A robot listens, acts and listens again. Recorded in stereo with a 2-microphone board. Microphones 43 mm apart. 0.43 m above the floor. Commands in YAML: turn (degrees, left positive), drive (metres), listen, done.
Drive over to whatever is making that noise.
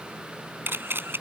turn: -65
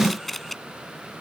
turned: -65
drive: 1.0
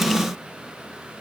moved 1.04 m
listen: true
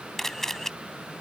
drive: 1.0
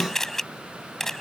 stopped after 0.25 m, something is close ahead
done: "Blocked. The camera shutter is further on, straight ahead."